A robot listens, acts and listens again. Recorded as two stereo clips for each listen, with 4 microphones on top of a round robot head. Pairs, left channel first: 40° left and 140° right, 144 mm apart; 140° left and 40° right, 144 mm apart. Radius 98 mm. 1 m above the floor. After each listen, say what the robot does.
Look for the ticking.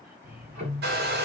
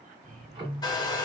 Turn 100° right.
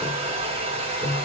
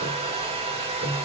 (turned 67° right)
Turn 30° right.
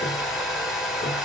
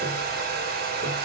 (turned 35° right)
Keep listening.
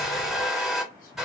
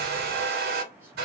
Keep listening.
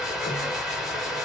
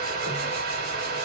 Facing where the ticking came from. I can't hear it now.